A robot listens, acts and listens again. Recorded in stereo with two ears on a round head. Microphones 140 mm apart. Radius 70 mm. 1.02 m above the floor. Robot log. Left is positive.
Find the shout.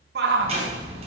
note: The shout: about 75° right or 105° right.
cmd yaw -75
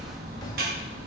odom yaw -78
cmd idle
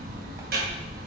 cmd idle
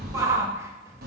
note: So it is at 20° right.
cmd yaw -20
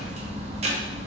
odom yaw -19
cmd idle
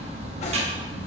cmd idle
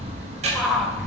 end: Facing the shout.